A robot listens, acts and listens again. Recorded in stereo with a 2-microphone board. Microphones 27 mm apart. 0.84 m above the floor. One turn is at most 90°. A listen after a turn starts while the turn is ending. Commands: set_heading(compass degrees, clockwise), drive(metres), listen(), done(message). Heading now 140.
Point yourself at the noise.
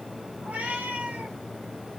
set_heading(210)
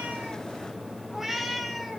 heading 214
done("Found it: a cat meowing, straight ahead, 1 to 2 m away.")